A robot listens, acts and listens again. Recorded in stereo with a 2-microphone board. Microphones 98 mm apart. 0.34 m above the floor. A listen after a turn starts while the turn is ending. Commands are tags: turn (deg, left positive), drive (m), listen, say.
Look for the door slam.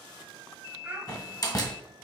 <turn deg="40"/>
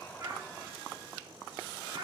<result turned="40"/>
<listen/>
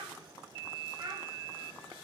<say>I heard a door slam, but can't make it out now. It was about straight ahead or 100° left.</say>